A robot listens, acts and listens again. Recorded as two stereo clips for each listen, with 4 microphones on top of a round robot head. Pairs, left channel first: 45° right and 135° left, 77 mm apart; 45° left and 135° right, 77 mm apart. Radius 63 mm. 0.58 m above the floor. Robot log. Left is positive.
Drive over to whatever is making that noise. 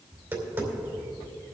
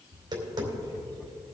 note: The tapping: 165° right.
cmd yaw -165
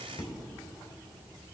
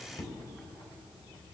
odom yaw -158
cmd fwd 1.0
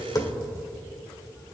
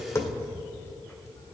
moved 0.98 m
cmd fwd 1.0
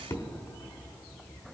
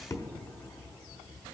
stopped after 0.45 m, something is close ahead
end: Arrived at the tapping, straight ahead.